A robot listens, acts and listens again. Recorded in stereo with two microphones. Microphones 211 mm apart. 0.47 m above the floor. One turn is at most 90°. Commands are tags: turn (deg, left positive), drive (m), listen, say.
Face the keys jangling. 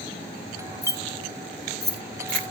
<turn deg="55"/>
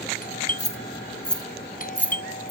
<say>Facing the keys jangling.</say>